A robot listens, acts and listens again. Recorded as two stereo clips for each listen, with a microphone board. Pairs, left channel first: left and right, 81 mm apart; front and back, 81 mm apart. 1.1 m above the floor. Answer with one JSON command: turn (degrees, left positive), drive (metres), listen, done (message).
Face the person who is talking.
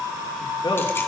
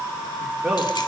{"turn": 95}
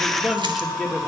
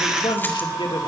{"done": "Found it: a man speaking, straight ahead."}